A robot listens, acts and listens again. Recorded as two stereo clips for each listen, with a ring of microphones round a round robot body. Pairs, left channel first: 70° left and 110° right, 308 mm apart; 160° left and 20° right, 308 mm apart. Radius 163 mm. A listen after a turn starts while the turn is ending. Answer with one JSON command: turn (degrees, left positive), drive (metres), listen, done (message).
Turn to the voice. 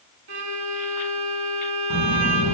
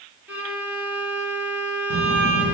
{"turn": -75}
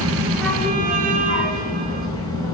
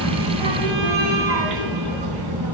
{"turn": -10}
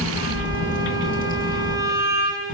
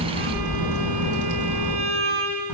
{"done": "Facing the child speaking."}